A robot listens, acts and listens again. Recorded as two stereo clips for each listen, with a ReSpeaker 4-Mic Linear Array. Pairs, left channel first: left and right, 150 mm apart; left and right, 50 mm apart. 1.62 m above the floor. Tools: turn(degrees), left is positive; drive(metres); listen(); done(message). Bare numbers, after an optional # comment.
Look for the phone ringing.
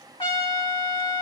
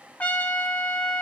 listen()
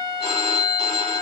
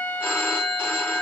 # The phone ringing: about 45° left or 135° left.
turn(45)
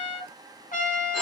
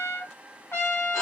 listen()
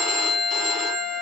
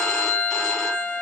done("Facing the phone ringing.")